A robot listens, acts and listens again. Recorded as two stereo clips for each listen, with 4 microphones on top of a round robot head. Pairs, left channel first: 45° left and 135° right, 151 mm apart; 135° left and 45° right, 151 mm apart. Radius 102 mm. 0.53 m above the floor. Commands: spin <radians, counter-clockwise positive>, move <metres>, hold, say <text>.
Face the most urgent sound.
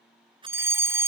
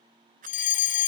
spin 2.62
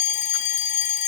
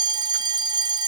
spin 0.26
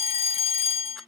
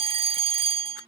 say Facing the fire alarm.